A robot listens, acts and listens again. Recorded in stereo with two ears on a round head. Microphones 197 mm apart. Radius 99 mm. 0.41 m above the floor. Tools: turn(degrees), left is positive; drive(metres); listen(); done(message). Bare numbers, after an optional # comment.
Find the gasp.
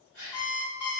# The gasp: about 60° right or 120° right.
turn(-60)
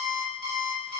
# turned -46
listen()
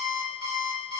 done("I heard a gasp, but can't make it out now. It was about 15° right or 75° right.")